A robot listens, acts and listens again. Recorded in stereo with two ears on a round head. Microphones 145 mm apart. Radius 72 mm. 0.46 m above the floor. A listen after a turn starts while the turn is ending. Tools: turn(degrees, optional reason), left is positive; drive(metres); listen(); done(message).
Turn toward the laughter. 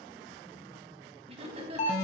turn(degrees=-40, reason="The laughter: about 40° right or 140° right.")
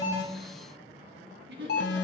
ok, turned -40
turn(degrees=-110, reason="So it is at 110° right.")
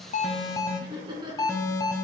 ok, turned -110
turn(degrees=-30, reason="The laughter is now 30° right.")
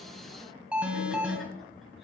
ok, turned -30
listen()
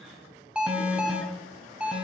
listen()
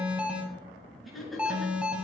done("Found it: laughter, straight ahead.")